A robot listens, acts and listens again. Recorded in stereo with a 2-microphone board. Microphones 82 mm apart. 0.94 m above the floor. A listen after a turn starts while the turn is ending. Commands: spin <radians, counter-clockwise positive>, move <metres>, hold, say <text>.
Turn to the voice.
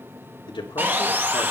spin 1.57
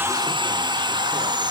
hold
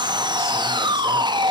hold
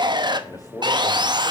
spin 0.79
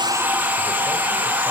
hold
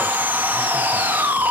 hold
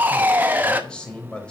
spin 0.17
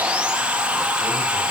hold
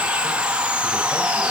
hold
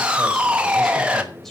say Facing the man speaking.